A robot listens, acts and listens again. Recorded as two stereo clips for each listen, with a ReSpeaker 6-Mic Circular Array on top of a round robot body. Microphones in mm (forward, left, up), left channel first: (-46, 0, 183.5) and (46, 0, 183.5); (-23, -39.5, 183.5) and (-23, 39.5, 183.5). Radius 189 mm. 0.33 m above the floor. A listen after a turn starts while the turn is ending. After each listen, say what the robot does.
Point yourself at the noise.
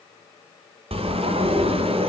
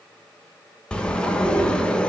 Turn 10° right.
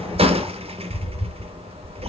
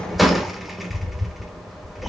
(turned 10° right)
Facing the sliding door, under 1 m away.